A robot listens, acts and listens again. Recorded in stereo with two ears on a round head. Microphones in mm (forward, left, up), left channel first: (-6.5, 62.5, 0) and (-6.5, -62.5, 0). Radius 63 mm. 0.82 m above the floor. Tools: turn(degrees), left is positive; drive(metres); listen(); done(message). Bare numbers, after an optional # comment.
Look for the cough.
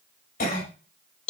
# The cough: about 70° left or 110° left.
turn(70)
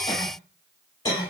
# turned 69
# So it is at 35° left.
turn(35)
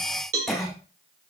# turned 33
done("Facing the cough, 2 to 4 m away.")